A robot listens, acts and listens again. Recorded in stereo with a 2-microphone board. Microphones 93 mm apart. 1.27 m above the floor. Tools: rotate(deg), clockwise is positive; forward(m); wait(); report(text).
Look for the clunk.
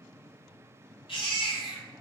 wait()
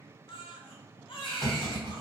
rotate(-35)
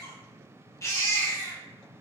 wait()
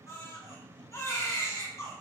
report("I heard a clunk, but can't make it out now. It was about straight ahead or 110° left.")